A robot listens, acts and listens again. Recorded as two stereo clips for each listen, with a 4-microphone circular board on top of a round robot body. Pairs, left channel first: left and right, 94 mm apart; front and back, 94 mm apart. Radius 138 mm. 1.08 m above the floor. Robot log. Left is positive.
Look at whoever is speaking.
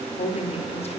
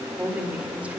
note: The woman speaking: 100° left.
cmd yaw +100
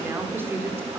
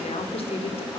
note: The woman speaking is now 20° right.
cmd yaw -20
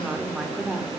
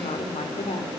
note: The woman speaking is now 10° right.
cmd yaw -10
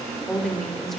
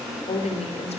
end: Facing the woman speaking.